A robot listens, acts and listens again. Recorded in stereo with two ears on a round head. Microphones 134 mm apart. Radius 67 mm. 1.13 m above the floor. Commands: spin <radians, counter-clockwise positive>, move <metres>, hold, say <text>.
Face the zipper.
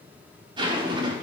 spin -0.52
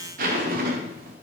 spin -2.01
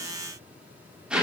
say Facing the zipper.